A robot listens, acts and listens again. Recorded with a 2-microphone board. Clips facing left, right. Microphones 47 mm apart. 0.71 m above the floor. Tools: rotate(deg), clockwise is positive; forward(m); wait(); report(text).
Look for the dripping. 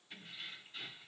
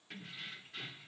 wait()
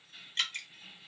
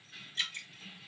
rotate(-60)
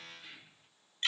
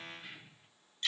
rotate(-45)
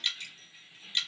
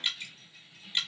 rotate(15)
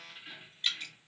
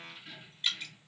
report("Facing the dripping.")